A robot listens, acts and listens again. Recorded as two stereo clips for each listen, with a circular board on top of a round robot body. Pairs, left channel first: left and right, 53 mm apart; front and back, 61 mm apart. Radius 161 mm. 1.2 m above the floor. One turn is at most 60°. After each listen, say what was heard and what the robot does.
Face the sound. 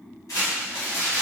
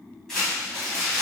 The crumpling: 85° left. Turn 60° left.
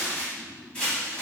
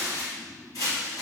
The crumpling is now 20° left. Turn 20° left.
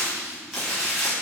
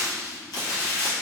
Found it: crumpling, straight ahead, 1 to 2 m away.